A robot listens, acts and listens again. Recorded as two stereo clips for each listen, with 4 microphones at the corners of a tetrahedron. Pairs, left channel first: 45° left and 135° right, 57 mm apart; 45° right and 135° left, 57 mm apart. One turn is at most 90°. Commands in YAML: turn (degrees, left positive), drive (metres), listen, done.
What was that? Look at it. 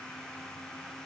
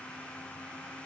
listen: true
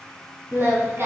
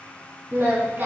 turn: -90
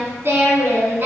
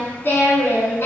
turn: -90
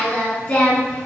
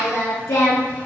turn: -15
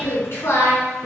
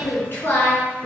turn: 10
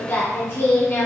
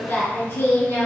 done: "Found it: singing, straight ahead."